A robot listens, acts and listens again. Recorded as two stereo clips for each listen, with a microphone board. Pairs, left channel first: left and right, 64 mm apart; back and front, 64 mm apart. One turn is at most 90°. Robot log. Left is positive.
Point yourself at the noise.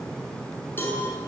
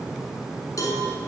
note: The cowbell: 150° left.
cmd yaw +90
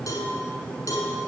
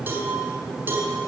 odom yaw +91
note: The cowbell is now 60° left.
cmd yaw +60
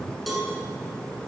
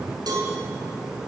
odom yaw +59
end: Found it: a cowbell, straight ahead.